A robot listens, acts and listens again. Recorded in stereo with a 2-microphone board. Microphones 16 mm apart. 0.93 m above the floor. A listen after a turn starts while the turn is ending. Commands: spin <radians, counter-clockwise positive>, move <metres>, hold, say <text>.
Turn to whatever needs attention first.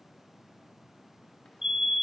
spin -0.79
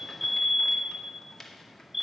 say Facing the fire alarm.